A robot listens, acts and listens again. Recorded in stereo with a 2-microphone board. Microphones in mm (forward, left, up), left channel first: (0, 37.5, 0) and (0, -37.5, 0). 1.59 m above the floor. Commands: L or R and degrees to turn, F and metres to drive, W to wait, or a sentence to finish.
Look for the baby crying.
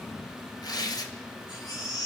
L75
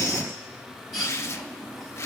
Facing the baby crying.